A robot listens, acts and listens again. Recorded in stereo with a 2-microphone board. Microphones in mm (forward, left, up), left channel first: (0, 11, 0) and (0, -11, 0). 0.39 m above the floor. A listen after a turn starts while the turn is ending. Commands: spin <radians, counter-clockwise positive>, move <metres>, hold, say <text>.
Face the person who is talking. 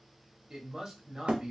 spin -0.44
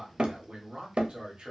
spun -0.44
spin -2.09
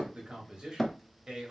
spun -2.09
spin -0.79
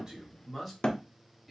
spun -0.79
say Found it: a man speaking, straight ahead, 1 to 2 m away.